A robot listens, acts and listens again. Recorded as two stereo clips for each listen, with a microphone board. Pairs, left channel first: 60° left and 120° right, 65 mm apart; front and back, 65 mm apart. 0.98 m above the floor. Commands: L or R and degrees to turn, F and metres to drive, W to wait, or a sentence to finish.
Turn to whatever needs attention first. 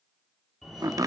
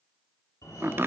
R25
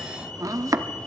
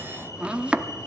Facing the fire alarm.